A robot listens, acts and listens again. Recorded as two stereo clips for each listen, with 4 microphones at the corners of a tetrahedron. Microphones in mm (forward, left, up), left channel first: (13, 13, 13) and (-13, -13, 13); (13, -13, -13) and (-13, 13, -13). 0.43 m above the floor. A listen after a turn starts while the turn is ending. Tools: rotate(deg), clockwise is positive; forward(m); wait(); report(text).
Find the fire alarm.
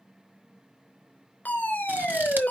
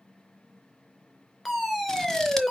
rotate(-40)
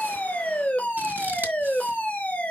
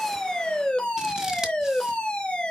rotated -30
rotate(-10)
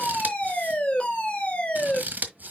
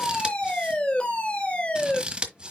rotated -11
report("Found it: a fire alarm, straight ahead, 2 to 4 m away.")